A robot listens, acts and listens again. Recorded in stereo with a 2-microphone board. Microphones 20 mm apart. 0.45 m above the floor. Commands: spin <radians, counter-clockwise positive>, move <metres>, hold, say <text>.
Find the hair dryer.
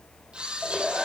spin -1.57
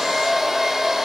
spin -0.17
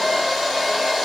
say Found it: a hair dryer, straight ahead.